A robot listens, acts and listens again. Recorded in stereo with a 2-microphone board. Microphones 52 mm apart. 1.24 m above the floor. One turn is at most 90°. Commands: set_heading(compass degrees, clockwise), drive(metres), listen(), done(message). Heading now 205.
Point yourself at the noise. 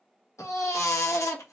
set_heading(115)
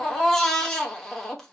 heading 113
set_heading(103)
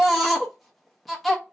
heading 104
done("Found it: a baby crying, straight ahead, 1 to 2 m away.")